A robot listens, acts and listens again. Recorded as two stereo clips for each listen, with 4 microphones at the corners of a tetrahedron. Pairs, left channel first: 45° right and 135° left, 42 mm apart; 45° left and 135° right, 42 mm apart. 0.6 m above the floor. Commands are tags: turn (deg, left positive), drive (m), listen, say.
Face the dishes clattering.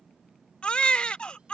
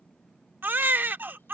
<listen/>
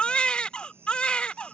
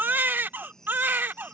<listen/>
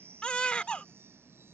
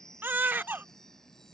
<say>I can't make out dishes clattering to turn to.</say>